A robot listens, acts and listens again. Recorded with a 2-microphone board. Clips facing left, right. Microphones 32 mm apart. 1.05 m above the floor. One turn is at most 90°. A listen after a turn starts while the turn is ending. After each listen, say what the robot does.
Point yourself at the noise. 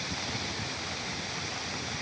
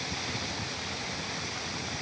Keep listening.
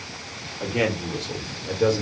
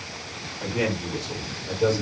Turn 70° left.
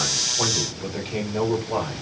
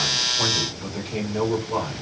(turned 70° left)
Turn 20° left.
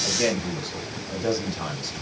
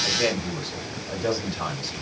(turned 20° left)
Turn 10° right.
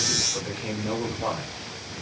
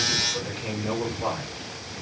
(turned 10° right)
Facing the man speaking.